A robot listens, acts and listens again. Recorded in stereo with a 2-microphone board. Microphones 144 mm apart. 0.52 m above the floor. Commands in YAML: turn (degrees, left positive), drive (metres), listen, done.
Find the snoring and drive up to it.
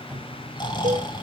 turn: 30
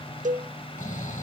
turn: 115
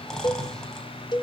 drive: 1.0
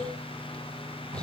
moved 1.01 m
listen: true
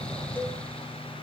drive: 1.0
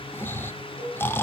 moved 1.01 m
turn: 20
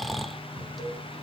drive: 1.0
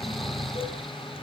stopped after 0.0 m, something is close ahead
done: "I am next to the snoring."